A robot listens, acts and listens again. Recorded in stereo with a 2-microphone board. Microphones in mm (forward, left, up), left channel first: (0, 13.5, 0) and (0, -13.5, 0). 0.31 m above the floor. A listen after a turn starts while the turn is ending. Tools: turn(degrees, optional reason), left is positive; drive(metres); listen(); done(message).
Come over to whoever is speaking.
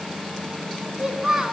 turn(degrees=-30)
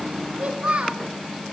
turn(degrees=-135, reason="So it is at 135° right.")
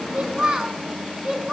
turn(degrees=-35, reason="The child speaking is now 35° right.")
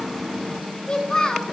turn(degrees=15, reason="The child speaking is now 15° left.")
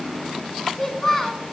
drive(metres=1.0)
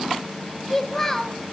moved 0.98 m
turn(degrees=10, reason="The child speaking is now 10° left.")
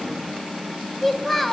drive(metres=1.0)
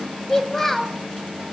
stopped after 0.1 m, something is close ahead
done("I am next to the child speaking.")